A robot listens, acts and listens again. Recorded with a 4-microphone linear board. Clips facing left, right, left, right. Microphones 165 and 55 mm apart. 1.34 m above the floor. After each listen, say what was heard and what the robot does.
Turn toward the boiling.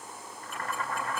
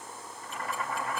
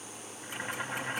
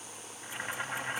Turn 30° right.
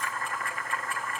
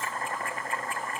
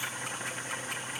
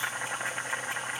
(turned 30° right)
So it is at 145° right. Turn 145° right.
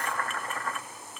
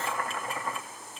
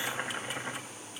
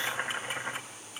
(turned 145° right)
The boiling is now 15° right. Turn 15° right.
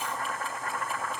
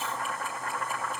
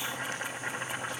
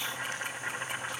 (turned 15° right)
Facing the boiling, 1 to 2 m away.